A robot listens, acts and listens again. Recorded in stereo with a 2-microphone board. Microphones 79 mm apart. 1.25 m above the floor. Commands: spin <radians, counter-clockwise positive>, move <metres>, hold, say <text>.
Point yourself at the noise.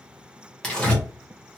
spin 0.52
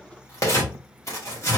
spin 2.27
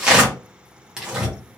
spin -0.17
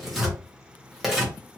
say Facing the tearing paper.